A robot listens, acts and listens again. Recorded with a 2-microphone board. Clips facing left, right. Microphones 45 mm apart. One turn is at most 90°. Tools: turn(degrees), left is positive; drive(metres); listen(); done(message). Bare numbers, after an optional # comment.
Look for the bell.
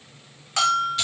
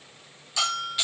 # The bell: about 50° left or 130° left.
turn(50)
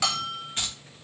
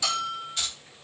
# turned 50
# So it is at 80° left.
turn(80)
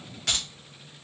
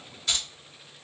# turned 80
listen()
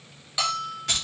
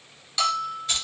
# The bell is now 15° left.
turn(15)
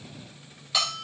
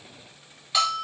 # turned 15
done("Facing the bell, 1 to 2 m away.")